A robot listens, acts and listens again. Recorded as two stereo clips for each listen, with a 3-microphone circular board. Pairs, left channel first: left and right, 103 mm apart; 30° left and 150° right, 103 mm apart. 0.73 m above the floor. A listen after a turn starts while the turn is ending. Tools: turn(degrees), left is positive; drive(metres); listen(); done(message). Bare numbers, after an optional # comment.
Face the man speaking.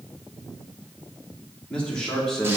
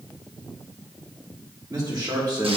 # The man speaking: 175° left.
turn(175)
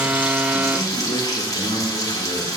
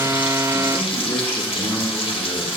listen()
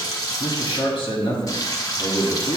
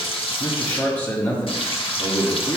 # The man speaking is now 85° left.
turn(85)
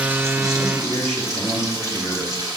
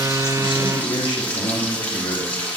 done("Facing the man speaking, 1 to 2 m away.")